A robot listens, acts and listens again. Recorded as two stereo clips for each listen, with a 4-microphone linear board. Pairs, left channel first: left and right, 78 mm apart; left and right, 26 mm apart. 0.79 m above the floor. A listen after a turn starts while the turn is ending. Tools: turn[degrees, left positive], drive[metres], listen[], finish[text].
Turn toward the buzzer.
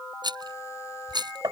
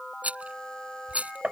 Action: listen[]
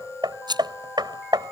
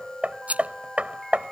Action: listen[]
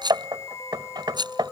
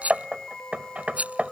Action: finish[I can't make out a buzzer, only a rattle and hammering.]